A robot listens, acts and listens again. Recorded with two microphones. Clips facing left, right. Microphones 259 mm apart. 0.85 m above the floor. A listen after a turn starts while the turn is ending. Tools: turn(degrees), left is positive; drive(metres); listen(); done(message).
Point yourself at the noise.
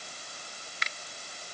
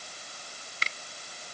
turn(degrees=-35)
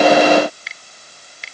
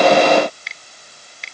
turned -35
done("Found it: a finger snap, straight ahead.")